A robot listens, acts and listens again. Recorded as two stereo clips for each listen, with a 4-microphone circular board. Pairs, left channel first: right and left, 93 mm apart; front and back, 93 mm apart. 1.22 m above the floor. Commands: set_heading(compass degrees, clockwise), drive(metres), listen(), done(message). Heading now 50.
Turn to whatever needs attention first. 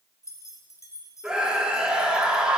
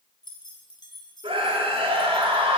set_heading(240)
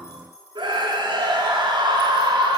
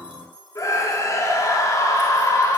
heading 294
set_heading(239)
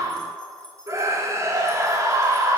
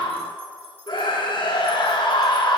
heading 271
set_heading(236)
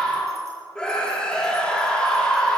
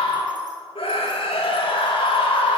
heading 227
set_heading(237)
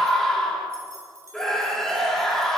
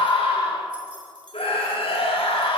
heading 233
done("Facing the scream.")